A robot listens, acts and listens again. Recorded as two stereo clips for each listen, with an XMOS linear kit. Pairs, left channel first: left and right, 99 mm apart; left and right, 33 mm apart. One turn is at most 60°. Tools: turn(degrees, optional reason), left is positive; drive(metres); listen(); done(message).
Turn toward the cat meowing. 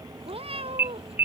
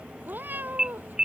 turn(degrees=-60)
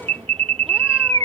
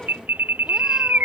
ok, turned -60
turn(degrees=-30, reason="Nothing new. It was at 30° right.")
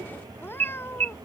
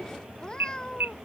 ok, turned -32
turn(degrees=25, reason="The cat meowing is now 25° left.")
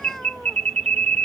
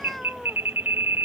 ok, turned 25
listen()
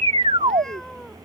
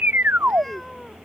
listen()
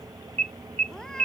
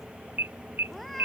done("Facing where the cat meowing came from. I can't hear it now.")